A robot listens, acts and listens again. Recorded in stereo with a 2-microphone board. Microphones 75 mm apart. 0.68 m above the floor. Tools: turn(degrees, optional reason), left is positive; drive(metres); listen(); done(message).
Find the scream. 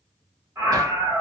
turn(degrees=-30, reason="The scream: about 30° right or 150° right.")
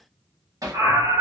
turn(degrees=-110, reason="So it is at 110° right.")
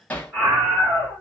turn(degrees=-20, reason="The scream is now 20° right.")
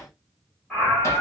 done("Found it: a scream, straight ahead.")